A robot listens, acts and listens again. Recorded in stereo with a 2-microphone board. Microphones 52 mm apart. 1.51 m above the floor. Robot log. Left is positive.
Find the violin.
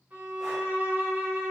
note: The violin: about 40° right or 140° right.
cmd yaw -40
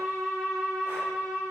end: Facing the violin.